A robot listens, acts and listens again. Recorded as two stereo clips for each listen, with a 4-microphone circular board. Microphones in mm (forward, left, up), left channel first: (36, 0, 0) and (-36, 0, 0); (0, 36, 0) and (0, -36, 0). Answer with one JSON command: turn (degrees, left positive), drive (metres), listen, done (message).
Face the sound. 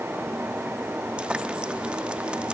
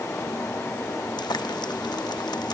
{"turn": 105}
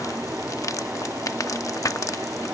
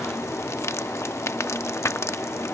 {"turn": 40}
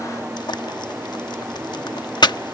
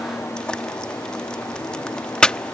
{"turn": 15}
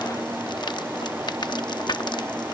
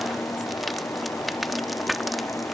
{"done": "Facing the frying."}